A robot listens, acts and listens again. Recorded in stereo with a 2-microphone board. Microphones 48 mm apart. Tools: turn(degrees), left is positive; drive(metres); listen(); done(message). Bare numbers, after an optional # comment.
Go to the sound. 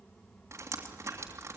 # The dripping: about 65° right or 115° right.
turn(-65)
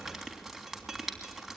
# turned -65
drive(1.0)
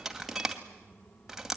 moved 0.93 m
drive(1.0)
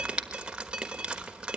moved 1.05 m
# The dripping is now 20° right.
turn(-20)
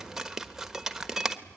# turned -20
# The dripping is now 10° right.
turn(-10)
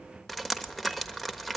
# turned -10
drive(1.0)
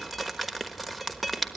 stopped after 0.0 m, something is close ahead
done("Arrived at the dripping, straight ahead.")